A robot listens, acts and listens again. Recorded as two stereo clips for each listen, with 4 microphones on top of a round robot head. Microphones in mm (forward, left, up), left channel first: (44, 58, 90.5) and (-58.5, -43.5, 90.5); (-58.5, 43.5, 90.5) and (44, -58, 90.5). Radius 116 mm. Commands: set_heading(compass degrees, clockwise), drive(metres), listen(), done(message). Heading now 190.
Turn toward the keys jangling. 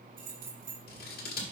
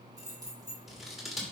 set_heading(300)
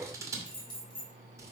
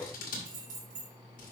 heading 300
set_heading(310)
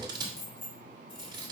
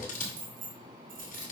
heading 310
set_heading(320)
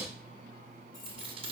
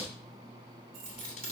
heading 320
set_heading(340)
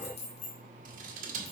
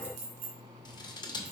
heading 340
done("Facing the keys jangling, 2 to 4 m away.")